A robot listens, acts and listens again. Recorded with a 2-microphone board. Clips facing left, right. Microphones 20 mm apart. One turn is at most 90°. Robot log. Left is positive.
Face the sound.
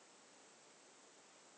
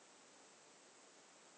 cmd idle
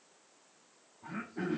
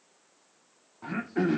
cmd yaw -90
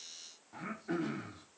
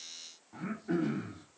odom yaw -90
note: So it is at 10° left.
cmd yaw +10
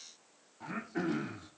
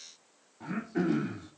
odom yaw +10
end: Facing the throat clearing.